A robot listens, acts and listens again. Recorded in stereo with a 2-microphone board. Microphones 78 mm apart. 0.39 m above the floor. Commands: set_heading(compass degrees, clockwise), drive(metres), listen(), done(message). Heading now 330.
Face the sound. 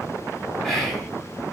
set_heading(300)
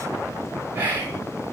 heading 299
set_heading(324)
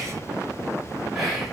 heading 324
done("Found it: whispering, straight ahead, 2 to 4 m away.")